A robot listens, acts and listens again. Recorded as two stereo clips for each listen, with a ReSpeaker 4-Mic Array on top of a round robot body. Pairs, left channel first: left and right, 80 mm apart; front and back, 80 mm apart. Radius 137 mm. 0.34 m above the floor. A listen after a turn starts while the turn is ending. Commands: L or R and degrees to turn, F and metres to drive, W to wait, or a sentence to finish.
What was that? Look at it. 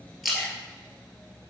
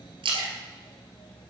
L180
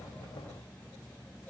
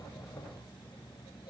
Facing where the splash came from. I can't hear it now.